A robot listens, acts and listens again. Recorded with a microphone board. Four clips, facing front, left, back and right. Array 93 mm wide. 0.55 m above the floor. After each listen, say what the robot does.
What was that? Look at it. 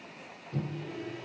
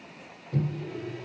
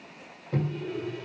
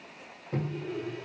Turn 145° right.
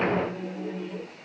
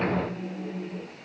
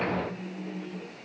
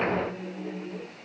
Facing the microwave.